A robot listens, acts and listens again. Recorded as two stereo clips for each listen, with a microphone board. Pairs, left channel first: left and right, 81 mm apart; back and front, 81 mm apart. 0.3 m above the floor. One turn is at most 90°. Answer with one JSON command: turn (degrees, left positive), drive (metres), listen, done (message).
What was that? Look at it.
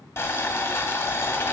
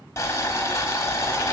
{"turn": 90}
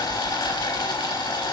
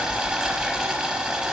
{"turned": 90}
{"turn": 80}
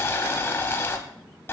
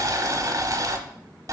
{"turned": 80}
{"turn": 30}
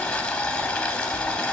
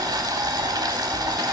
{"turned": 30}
{"turn": 15}
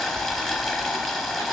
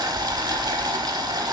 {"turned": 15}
{"done": "Found it: boiling, straight ahead, under 1 m away."}